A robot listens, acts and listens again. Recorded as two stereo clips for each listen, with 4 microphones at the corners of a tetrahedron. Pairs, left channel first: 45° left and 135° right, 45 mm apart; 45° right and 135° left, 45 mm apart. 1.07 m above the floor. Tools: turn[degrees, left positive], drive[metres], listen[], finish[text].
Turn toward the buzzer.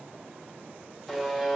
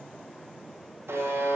Thought: The buzzer: 135° left.
Action: turn[135]
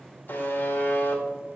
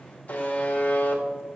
Action: finish[Facing the buzzer, 1 to 2 m away.]